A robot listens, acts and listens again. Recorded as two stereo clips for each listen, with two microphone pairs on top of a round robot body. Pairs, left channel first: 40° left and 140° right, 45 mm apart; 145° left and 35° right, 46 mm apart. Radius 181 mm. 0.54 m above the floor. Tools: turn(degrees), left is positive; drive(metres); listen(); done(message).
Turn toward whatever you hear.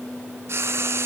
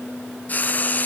turn(degrees=-165)
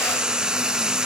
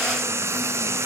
turn(degrees=-65)
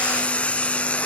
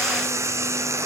turn(degrees=-20)
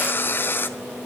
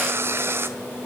done("Found it: frying, straight ahead, 1 to 2 m away.")